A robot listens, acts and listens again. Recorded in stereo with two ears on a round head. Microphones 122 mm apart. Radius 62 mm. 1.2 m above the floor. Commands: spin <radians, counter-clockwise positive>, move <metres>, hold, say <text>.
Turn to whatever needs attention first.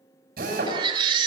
spin -0.70
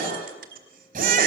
spin -1.75
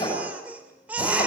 spin -0.17
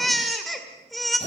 say Facing the baby crying, 1 to 2 m away.